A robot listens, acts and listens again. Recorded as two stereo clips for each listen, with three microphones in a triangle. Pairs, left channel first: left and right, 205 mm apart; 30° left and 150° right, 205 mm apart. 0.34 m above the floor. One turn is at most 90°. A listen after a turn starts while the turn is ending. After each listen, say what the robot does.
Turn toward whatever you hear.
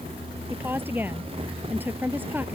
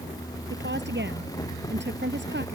Turn 90° right.
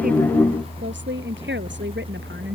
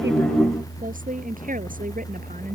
Turn 90° right.
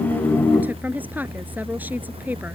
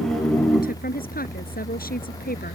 Turn 10° right.
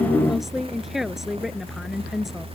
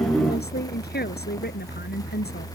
Found it: a woman speaking, straight ahead.